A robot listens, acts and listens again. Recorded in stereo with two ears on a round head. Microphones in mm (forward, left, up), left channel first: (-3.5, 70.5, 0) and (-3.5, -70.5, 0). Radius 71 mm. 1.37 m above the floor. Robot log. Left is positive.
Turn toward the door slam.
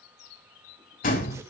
note: The door slam: about 55° left or 125° left.
cmd yaw +55
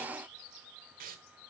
cmd idle
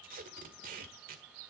end: I heard a door slam, but can't make it out now. It was about straight ahead or 70° left.